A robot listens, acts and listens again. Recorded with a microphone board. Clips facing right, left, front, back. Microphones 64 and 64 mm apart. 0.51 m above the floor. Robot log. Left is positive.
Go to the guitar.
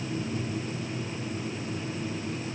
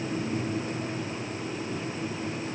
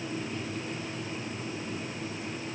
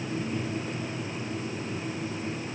cmd idle
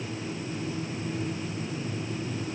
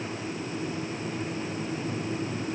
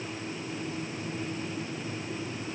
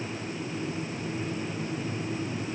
cmd idle
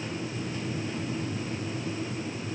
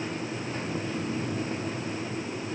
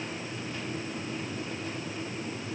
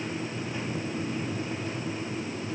end: I can't make out a guitar to turn to.